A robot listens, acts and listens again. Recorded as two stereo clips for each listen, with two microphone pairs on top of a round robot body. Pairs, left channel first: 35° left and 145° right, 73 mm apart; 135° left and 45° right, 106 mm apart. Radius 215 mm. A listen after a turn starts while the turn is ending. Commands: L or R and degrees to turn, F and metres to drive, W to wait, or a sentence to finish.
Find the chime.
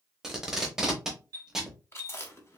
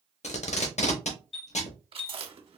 L175
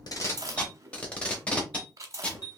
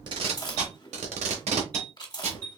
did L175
Found it: a chime, straight ahead, under 1 m away.